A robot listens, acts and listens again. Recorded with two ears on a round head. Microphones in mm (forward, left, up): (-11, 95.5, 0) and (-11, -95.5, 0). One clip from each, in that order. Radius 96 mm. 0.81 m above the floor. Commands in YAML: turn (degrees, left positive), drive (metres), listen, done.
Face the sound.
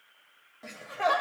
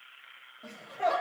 turn: 65
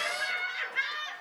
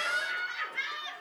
turn: 10
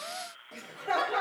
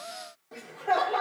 done: "Found it: laughter, straight ahead."